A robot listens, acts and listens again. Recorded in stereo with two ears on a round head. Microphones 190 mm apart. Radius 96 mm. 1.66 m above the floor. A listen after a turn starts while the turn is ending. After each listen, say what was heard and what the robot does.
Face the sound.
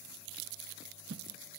The whoosh: about 60° right or 120° right. Turn 60° right.
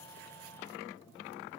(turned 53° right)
Keep listening.
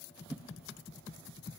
Found it: a whoosh, straight ahead.